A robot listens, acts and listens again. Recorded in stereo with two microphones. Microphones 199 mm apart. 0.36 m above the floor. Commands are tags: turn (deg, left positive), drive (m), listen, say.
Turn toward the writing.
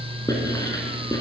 <turn deg="20"/>
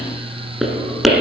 <say>Found it: writing, straight ahead.</say>